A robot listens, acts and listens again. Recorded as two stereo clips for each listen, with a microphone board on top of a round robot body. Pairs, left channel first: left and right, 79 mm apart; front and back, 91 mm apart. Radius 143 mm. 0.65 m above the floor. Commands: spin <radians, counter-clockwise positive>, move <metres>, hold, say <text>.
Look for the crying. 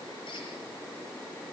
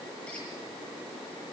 hold
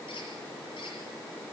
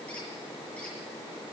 hold
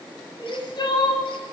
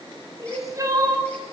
spin 2.18
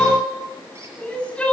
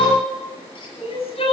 spin 0.26
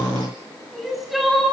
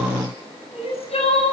say Found it: crying, straight ahead.